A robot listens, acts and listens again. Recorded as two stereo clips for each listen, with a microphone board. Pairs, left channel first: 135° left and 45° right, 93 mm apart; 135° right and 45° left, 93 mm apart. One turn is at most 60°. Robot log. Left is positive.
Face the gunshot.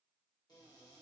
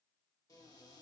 cmd idle
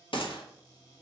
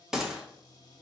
note: The gunshot: 130° left.
cmd yaw +60
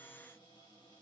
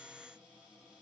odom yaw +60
note: Nothing new. It was at 70° left.
cmd yaw +60
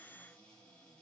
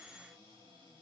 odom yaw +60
note: Nothing new. It was at 10° left.
cmd yaw +10
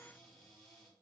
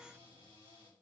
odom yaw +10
end: I heard a gunshot from this way, but can't make it out now.